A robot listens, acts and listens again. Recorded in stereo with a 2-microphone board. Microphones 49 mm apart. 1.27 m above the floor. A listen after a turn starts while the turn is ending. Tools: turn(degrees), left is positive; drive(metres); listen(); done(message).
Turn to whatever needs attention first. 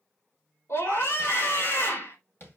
turn(degrees=90)
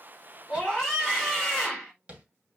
done("Found it: a scream, straight ahead.")